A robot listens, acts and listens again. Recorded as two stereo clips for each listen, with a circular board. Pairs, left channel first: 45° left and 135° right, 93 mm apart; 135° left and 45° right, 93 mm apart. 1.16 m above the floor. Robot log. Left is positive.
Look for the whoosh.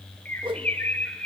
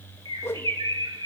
note: The whoosh: 160° right.
cmd yaw -160
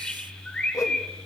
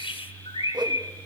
note: The whoosh is now 10° right.
cmd yaw -10
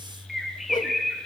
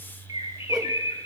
cmd idle
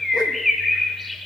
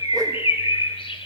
cmd idle
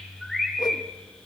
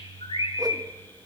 end: Facing where the whoosh came from. I can't hear it now.